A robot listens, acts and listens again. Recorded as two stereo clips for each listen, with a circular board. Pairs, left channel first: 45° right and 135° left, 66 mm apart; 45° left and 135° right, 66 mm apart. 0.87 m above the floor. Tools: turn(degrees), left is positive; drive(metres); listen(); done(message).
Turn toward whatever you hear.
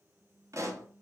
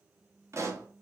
turn(degrees=180)
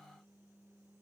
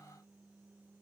done("Facing where the pop came from. I can't hear it now.")